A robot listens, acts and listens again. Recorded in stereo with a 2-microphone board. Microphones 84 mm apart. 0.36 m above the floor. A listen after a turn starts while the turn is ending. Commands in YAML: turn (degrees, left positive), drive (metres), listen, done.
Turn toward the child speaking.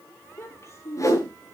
turn: 35
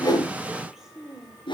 done: "Facing the child speaking."